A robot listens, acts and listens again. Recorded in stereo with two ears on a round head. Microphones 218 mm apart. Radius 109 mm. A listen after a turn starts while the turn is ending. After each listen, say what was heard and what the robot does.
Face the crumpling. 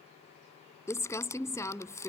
Turn 30° left.
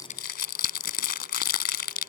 So it is at 135° left. Turn 135° left.
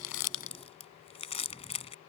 The crumpling is now 25° left. Turn 25° left.
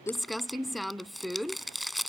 Facing the crumpling.